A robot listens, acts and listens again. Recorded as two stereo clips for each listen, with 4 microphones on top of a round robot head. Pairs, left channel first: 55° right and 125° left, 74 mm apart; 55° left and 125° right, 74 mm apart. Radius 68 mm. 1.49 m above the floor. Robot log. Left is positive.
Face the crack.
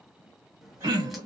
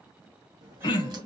note: The crack: 150° right.
cmd yaw -150
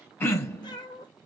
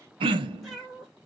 end: I heard a crack from this way, but can't make it out now.